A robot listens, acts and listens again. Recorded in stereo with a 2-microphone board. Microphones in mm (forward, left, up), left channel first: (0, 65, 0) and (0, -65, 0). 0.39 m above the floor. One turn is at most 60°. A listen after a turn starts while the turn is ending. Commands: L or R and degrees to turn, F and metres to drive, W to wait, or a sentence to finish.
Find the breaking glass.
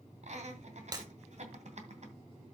R30
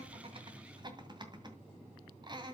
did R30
W
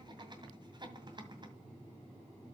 I heard breaking glass, but can't make it out now. It was about straight ahead or 120° right.